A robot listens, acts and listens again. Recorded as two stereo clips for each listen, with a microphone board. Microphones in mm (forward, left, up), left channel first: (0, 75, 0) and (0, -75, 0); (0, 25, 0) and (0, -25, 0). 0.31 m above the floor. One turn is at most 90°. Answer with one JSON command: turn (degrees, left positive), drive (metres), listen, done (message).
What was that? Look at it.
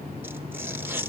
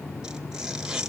{"turn": -30}
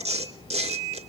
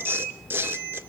{"turn": -90}
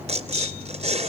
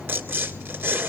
{"turn": -45}
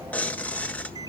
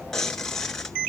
{"turn": 10}
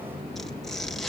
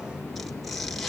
{"listen": true}
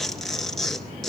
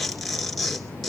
{"done": "Facing the tearing paper."}